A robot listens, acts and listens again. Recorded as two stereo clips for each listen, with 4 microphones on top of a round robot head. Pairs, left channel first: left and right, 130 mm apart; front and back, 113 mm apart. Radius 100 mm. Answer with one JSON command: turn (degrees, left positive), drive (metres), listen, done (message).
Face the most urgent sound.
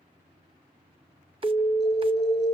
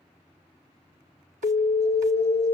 {"done": "Facing the alarm, 1 to 2 m away."}